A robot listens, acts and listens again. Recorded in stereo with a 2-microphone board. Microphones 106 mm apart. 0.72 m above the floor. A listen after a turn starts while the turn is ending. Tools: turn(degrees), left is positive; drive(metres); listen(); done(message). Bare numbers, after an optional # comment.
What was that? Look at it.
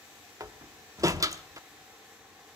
# The door slam: about 30° right or 150° right.
turn(-30)
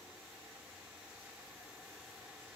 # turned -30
listen()
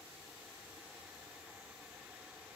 done("I heard a door slam, but can't make it out now. It was about straight ahead or 120° right.")